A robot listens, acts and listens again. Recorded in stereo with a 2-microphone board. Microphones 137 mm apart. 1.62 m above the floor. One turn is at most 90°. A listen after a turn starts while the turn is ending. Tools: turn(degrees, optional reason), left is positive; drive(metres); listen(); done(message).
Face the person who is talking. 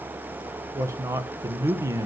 turn(degrees=-20, reason="The man speaking: about 20° right or 160° right.")
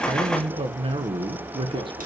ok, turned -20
turn(degrees=-90, reason="So it is at 135° right.")
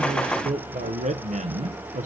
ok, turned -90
turn(degrees=-90, reason="The man speaking is now 90° right.")
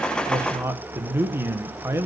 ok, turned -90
turn(degrees=-20, reason="The man speaking is now 20° right.")
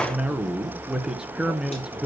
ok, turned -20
done("Facing the man speaking.")